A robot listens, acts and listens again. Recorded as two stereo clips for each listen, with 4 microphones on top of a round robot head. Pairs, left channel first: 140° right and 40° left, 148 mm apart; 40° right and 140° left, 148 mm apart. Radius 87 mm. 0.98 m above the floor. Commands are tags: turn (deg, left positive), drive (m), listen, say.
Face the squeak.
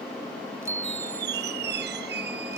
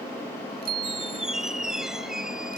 <turn deg="50"/>
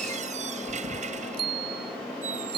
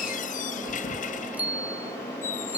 <say>Found it: a squeak, straight ahead.</say>